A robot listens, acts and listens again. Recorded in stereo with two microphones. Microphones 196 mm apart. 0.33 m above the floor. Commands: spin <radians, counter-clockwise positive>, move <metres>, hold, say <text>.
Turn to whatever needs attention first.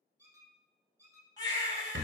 spin 0.35
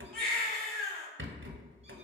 say Facing the baby crying, 1 to 2 m away.